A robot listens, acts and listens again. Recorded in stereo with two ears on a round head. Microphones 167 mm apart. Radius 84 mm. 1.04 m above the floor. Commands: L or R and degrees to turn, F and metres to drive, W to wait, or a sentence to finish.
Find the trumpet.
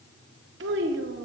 W
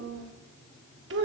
W
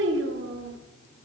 I can't make out a trumpet to turn to.